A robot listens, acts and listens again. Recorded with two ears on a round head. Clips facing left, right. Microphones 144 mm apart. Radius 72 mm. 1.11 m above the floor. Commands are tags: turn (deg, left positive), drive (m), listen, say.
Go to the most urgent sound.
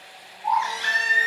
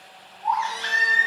<turn deg="25"/>
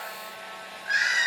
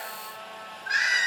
<drive m="1.0"/>
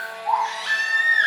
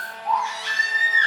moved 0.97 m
<drive m="1.0"/>
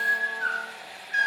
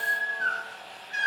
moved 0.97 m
<drive m="1.0"/>
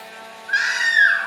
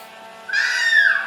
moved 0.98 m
<turn deg="-15"/>
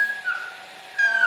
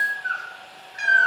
<drive m="1.0"/>
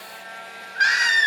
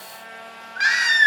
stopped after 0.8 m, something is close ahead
<turn deg="-10"/>
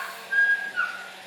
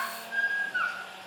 <say>I am next to the baby crying.</say>